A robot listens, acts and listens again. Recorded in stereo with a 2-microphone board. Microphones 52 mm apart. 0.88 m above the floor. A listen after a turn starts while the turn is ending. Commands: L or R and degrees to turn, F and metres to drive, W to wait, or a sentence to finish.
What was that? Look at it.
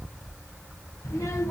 L75
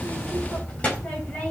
L25
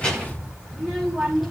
Facing the child speaking.